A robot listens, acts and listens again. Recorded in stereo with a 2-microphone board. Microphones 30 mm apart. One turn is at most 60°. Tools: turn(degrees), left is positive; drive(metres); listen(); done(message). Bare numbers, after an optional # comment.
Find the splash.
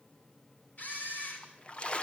# The splash: about 35° left or 145° left.
turn(35)
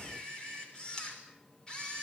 listen()
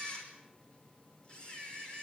done("I heard a splash, but can't make it out now. It was about straight ahead or 110° left.")